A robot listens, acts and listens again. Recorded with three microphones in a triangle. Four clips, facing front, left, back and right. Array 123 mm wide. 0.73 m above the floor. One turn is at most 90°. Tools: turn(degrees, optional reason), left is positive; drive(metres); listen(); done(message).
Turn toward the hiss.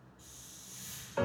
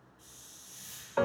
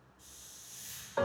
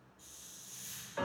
turn(degrees=20, reason="The hiss: 20° left.")
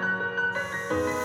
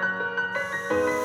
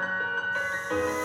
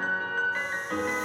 listen()
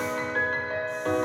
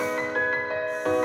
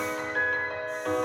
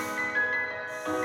listen()
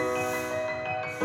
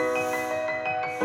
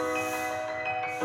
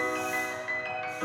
done("Facing where the hiss came from. I can't hear it now.")